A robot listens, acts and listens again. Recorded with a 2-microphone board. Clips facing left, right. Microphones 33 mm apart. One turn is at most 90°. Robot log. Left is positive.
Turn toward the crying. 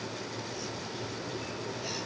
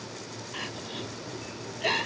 note: The crying: about 50° right or 130° right.
cmd yaw -50
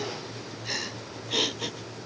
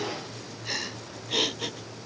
end: Facing the crying.